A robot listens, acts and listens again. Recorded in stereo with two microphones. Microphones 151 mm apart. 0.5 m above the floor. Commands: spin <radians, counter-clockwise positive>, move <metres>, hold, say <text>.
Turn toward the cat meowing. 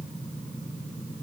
hold
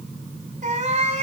spin -0.79
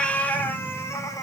spin 0.44
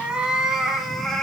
say Facing the cat meowing.